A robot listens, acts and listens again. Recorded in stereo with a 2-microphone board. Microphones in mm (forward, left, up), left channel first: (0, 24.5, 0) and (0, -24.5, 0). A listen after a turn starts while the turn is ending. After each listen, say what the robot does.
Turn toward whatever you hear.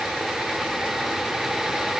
Keep listening.
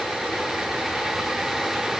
Keep listening.
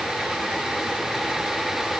I can't make out anything.